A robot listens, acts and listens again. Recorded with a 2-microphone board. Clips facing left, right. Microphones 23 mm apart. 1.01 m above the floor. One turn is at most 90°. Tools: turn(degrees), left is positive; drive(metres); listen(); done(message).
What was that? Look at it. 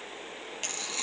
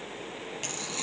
turn(degrees=30)
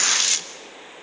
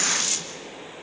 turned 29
turn(degrees=90)
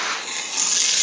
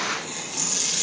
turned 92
turn(degrees=50)
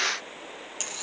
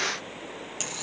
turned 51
done("Facing the tearing paper, 1 to 2 m away.")